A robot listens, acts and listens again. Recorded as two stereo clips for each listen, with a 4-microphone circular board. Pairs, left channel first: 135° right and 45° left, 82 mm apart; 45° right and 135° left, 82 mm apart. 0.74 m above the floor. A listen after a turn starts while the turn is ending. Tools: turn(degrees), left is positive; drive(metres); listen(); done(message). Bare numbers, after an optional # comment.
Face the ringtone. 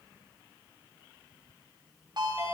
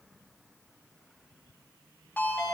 # The ringtone: 25° left.
turn(25)
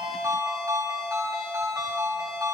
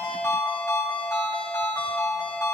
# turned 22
done("Found it: a ringtone, straight ahead.")